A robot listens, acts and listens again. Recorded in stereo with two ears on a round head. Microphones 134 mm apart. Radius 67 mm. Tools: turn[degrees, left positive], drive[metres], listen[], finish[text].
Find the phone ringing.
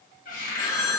Thought: The phone ringing: about 25° left or 155° left.
Action: turn[25]
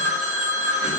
Action: finish[Facing the phone ringing.]